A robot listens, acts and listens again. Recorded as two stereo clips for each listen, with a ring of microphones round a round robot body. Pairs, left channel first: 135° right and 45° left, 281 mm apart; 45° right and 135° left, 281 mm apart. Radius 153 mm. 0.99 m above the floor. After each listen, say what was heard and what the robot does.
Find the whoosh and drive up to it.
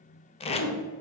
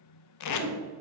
The whoosh: 10° left. Turn 10° left.
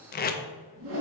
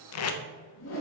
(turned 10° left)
Drive 1.0 m forward.
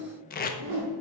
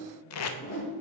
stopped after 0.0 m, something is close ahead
Something is in my way. I am facing the whoosh but have not reached it.